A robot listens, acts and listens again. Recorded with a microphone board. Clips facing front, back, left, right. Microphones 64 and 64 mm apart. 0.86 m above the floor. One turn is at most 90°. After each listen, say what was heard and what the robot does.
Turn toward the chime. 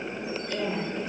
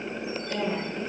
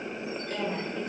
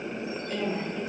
Keep listening.
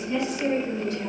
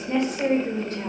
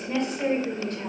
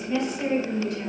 Keep listening.
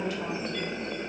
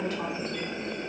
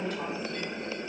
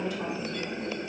I can't make out a chime to turn to.